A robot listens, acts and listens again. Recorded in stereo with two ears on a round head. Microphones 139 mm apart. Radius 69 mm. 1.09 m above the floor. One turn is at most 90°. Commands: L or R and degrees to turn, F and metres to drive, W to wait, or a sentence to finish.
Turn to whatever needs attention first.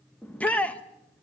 L30
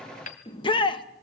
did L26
L90
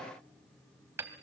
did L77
L65
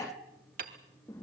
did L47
L20
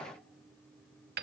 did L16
W
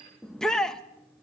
Found it: a shout, straight ahead, 1 to 2 m away.